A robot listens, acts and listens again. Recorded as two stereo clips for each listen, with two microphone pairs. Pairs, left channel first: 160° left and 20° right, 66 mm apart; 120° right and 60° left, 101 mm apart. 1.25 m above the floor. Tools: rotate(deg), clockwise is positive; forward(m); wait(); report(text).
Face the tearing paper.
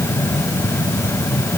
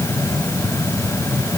wait()
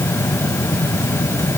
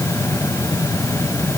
wait()
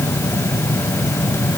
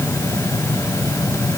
report("I can't make out tearing paper.")